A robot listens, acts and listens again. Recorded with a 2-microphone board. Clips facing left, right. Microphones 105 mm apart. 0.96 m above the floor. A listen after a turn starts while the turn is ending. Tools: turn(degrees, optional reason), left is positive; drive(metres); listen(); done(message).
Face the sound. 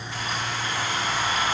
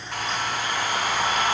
turn(degrees=-55, reason="The hair dryer: about 55° right or 125° right.")
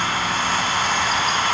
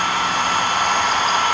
turn(degrees=-60, reason="So it is at 60° right.")
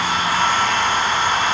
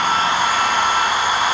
turn(degrees=-10, reason="The hair dryer is now 10° right.")
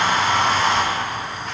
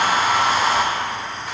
done("Facing the hair dryer.")